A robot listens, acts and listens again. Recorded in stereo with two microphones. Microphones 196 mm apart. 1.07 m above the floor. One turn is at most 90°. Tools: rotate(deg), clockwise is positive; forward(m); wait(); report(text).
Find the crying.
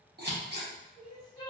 rotate(-20)
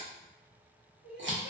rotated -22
rotate(-90)
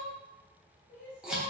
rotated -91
rotate(-45)
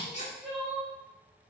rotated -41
report("Found it: crying, straight ahead, under 1 m away.")